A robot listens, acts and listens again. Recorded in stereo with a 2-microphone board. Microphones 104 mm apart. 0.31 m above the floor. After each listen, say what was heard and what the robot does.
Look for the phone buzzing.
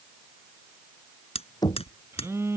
The phone buzzing: about 25° right or 155° right. Turn 25° right.
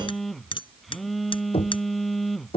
Facing the phone buzzing.